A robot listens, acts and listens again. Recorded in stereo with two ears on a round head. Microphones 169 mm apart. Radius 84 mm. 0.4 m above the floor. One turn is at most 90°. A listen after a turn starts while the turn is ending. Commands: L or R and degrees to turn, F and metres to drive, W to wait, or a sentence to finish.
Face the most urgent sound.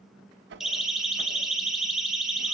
R30
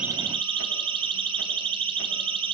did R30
R90
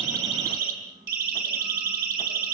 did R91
R55
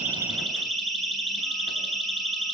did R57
Facing the siren.